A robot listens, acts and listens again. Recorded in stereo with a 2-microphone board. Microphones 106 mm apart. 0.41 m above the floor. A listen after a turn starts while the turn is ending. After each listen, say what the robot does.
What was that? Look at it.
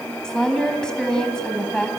Turn 30° left.
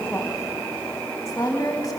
Turn 145° left.
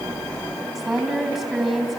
Found it: a woman speaking, straight ahead.